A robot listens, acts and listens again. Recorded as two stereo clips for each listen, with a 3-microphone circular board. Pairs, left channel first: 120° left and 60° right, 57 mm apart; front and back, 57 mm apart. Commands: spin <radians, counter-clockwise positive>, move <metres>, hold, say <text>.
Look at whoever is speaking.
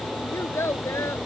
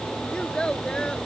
spin 1.31
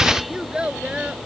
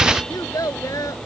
spin 0.26
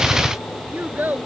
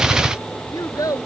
say Found it: a child speaking, straight ahead.